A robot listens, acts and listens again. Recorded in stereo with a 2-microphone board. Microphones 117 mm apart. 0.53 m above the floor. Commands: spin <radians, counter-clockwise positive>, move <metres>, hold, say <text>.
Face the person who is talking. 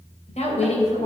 spin 1.13
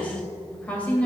spin 0.17
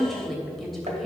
say Found it: a woman speaking, straight ahead.